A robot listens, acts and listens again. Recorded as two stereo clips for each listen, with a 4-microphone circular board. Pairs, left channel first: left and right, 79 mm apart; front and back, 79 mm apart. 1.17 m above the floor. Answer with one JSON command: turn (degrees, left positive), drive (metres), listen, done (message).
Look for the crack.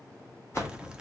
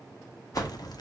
{"turn": -10}
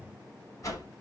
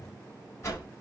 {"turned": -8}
{"done": "I heard a crack from this way, but can't make it out now."}